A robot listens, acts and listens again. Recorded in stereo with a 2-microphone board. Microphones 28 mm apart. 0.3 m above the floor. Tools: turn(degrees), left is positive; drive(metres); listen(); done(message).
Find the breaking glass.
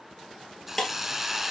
turn(degrees=20)
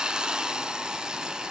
listen()
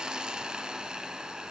done("I heard breaking glass, but can't make it out now. It was about straight ahead or 140° left.")